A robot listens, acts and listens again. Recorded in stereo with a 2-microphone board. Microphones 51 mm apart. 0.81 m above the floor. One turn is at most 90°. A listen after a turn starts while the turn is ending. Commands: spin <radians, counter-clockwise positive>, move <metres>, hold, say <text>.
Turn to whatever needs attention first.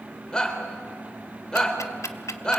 spin 0.26
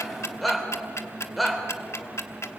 say Found it: a shout, straight ahead, 2 to 4 m away.